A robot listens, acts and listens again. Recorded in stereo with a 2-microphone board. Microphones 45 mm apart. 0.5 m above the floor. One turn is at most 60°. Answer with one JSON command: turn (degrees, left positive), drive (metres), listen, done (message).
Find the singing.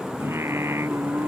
{"turn": -60}
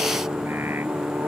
{"turn": -55}
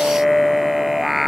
{"done": "Found it: singing, straight ahead."}